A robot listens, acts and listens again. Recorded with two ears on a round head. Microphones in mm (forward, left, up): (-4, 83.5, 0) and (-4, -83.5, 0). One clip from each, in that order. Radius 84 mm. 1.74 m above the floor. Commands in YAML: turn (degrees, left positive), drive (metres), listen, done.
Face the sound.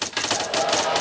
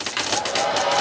turn: -30
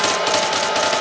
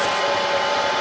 turn: 20
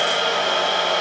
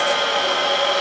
done: "Found it: a hair dryer, straight ahead."